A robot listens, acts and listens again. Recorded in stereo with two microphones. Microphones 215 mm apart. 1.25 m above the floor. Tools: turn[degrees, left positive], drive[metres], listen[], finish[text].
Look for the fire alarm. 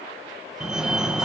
Action: turn[-30]
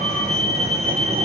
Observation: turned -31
Thought: So it is at 145° right.
Action: turn[-145]
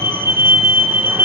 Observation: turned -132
Thought: The fire alarm is now 15° right.
Action: turn[-15]
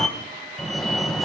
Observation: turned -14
Action: finish[Facing the fire alarm.]